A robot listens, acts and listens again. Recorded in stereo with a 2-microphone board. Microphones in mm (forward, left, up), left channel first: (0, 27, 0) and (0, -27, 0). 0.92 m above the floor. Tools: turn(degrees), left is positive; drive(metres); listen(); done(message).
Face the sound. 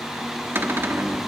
turn(degrees=-50)
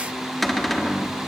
done("Facing the cupboard door.")